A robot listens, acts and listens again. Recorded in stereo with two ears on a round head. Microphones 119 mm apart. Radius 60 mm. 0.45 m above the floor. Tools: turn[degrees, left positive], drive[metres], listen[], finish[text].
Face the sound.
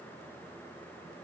Action: listen[]
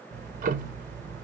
Thought: The ticking: about 60° right or 120° right.
Action: turn[-60]
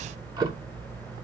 Thought: So it is at 30° right.
Action: turn[-30]
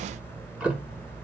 Thought: The ticking is now 10° right.
Action: turn[-10]
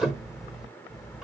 Action: finish[Found it: ticking, straight ahead.]